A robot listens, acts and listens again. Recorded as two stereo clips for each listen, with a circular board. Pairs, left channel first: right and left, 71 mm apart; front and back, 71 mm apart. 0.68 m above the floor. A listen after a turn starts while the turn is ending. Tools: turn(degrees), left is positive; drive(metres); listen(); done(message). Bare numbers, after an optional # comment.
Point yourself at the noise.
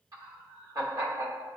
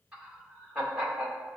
# The laughter: 105° left.
turn(105)
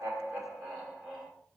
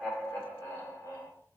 done("Found it: laughter, straight ahead, 1 to 2 m away.")